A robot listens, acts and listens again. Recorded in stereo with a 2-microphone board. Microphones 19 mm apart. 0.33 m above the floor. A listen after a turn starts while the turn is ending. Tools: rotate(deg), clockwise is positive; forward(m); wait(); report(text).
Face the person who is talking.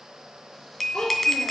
rotate(-70)
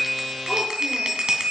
wait()
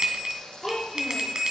rotate(-10)
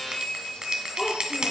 report("Found it: a child speaking, straight ahead, 2 to 4 m away.")